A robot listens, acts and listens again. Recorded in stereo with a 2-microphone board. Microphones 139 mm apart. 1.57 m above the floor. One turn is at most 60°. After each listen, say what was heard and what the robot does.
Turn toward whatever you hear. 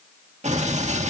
The explosion: about 55° right or 125° right. Turn 55° right.
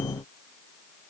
Keep listening.
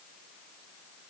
I heard an explosion, but can't make it out now. It was about straight ahead or 70° right.